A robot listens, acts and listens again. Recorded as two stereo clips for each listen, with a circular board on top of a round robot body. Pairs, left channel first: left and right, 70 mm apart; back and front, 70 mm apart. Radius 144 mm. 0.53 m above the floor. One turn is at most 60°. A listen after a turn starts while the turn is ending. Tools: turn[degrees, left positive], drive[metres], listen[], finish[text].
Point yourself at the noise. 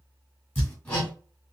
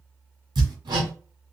Thought: The hammering: 25° left.
Action: turn[25]
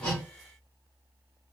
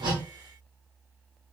Action: listen[]
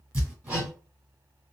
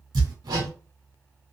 Thought: The hammering is now 15° right.
Action: turn[-15]
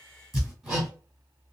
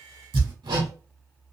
Action: finish[Facing the hammering, 2 to 4 m away.]